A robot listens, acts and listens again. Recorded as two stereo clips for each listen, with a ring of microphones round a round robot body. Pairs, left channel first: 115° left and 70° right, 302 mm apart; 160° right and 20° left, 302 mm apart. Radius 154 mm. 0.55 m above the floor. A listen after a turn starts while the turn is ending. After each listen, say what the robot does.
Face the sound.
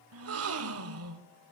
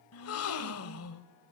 Turn 115° right.
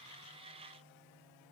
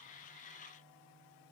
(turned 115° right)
Facing where the gasp came from. I can't hear it now.